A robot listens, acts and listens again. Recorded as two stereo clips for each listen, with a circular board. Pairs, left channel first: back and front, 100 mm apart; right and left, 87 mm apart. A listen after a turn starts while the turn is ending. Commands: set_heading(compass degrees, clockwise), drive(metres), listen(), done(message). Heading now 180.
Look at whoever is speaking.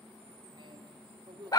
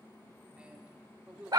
set_heading(165)
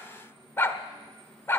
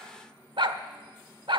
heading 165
listen()
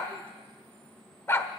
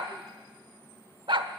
listen()
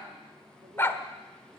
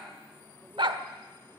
done("I heard a man speaking from this way, but can't make it out now.")